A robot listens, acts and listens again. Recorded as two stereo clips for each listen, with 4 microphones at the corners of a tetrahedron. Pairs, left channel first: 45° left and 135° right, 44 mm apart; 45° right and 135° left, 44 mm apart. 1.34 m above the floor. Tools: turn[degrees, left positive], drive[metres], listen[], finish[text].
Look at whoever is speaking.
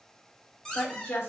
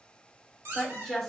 Thought: The woman speaking: 40° left.
Action: turn[40]
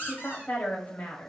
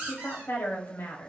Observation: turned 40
Action: finish[Facing the woman speaking.]